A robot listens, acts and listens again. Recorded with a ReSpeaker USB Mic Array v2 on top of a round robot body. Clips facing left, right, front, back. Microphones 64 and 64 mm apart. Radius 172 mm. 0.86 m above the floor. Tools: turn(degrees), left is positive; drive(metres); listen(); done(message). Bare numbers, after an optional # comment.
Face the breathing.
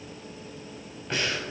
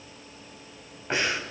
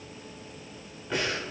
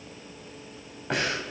# The breathing: 155° right.
turn(-155)
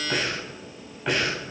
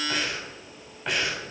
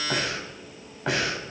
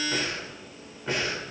done("Facing the breathing.")